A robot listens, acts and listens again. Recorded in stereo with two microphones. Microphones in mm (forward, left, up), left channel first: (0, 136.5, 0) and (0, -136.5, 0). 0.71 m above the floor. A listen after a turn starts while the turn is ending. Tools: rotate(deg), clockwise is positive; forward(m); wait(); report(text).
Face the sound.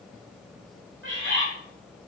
rotate(45)
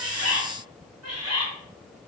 rotate(75)
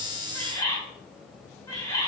rotate(-15)
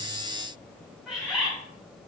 report("Found it: a bird, straight ahead.")